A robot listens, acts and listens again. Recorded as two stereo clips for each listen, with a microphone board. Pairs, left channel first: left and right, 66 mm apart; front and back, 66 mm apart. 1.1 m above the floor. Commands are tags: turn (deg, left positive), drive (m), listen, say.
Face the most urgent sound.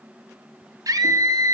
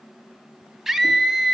<turn deg="-95"/>
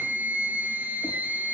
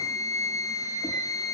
<turn deg="-25"/>
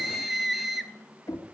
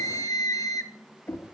<say>Found it: a scream, straight ahead, 1 to 2 m away.</say>